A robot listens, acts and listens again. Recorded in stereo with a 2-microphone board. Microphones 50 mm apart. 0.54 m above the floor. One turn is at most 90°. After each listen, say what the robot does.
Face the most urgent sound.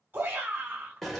Turn 35° right.
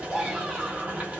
Found it: a shout, straight ahead, 1 to 2 m away.